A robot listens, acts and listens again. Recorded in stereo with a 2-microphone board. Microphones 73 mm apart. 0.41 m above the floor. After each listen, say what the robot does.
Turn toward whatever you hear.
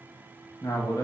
Turn 70° left.
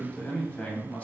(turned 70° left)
Turn 25° left.
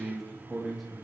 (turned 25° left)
Facing the man speaking.